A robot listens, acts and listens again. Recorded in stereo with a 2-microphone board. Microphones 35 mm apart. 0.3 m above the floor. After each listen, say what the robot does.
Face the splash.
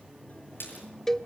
Turn 90° left.
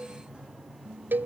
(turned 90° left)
I heard a splash from this way, but can't make it out now.